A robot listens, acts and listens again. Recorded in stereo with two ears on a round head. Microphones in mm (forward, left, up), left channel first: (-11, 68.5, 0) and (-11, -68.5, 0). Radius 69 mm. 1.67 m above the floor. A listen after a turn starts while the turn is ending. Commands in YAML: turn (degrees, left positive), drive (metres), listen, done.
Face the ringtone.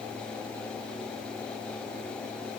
listen: true
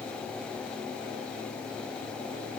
listen: true
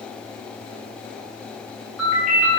turn: -30
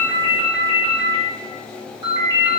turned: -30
turn: -150
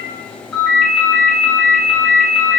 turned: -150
done: "Facing the ringtone, 1 to 2 m away."